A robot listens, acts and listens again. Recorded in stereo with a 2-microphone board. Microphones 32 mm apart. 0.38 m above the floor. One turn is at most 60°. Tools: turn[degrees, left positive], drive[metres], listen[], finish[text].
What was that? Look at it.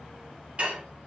Thought: The dishes clattering: about 40° right or 140° right.
Action: turn[-40]
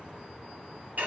Thought: So it is at 100° right.
Action: turn[-60]
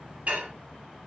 Thought: The dishes clattering is now 55° right.
Action: turn[-55]
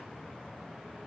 Action: listen[]
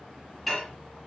Action: finish[Facing the dishes clattering, 1 to 2 m away.]